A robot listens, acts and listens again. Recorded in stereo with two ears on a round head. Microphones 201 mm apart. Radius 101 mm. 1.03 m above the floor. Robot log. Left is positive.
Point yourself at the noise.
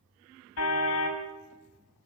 note: The car horn: about 75° left or 105° left.
cmd yaw +75
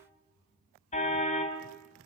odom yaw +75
note: So it is at 30° left.
cmd yaw +30
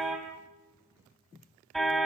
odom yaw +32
end: Found it: a car horn, straight ahead.